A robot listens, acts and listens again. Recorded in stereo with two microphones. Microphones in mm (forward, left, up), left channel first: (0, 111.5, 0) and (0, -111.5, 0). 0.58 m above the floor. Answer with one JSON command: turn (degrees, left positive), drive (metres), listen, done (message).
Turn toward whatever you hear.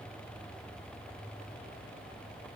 {"listen": true}
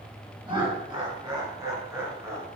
{"turn": -30}
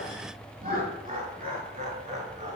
{"turn": -145}
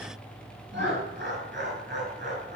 {"turn": -50}
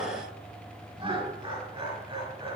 {"turn": -20}
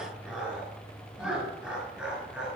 {"done": "Facing the laughter."}